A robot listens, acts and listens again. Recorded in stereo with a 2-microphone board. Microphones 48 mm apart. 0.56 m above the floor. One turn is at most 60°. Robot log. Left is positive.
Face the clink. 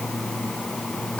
cmd idle
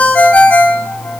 cmd idle
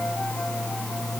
end: I can't make out a clink to turn to.